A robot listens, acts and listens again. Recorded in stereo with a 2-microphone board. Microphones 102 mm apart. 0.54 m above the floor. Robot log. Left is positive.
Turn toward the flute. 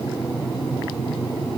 cmd idle
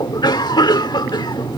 cmd idle
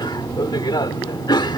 end: I can't make out a flute to turn to.